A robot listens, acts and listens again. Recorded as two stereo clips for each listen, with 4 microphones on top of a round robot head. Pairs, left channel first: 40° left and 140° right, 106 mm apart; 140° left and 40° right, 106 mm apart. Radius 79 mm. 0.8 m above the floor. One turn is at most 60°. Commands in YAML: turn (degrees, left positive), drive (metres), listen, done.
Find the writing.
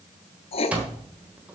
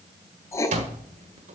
turn: 60
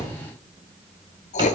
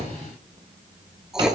turn: 45
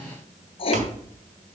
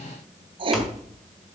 done: "Found it: writing, straight ahead."